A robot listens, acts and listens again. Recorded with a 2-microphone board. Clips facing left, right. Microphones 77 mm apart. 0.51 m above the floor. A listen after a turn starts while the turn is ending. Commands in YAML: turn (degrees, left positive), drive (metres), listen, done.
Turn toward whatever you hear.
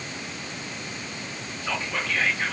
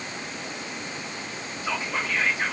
turn: -30
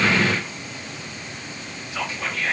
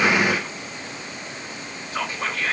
turn: -135
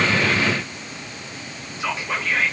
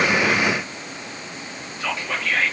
turn: 20
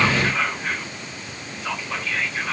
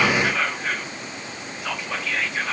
done: "Found it: whispering, straight ahead."